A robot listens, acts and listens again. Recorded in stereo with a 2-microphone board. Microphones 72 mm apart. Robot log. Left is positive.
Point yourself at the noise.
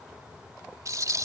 note: The rattle: about 50° right or 130° right.
cmd yaw -50
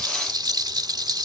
note: So it is at 80° right.
cmd yaw -80
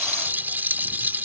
note: The rattle is now 25° right.
cmd yaw -25
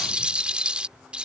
note: The rattle is now 15° right.
cmd yaw -15
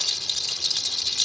end: Facing the rattle.